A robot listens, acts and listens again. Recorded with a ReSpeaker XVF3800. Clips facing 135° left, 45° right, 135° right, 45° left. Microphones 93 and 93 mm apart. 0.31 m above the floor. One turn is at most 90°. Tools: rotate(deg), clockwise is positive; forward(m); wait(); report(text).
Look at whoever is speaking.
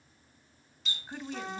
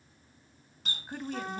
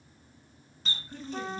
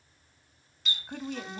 rotate(-30)
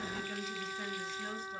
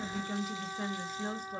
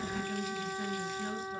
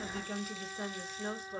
report("Found it: a woman speaking, straight ahead.")